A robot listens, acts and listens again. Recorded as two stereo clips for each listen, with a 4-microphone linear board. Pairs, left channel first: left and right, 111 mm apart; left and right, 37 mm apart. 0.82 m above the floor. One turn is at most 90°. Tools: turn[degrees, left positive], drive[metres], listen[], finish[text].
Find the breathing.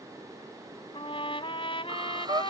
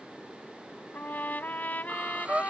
Thought: The breathing: about 40° right or 140° right.
Action: turn[-40]
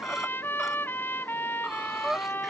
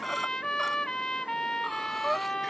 Action: finish[Found it: breathing, straight ahead.]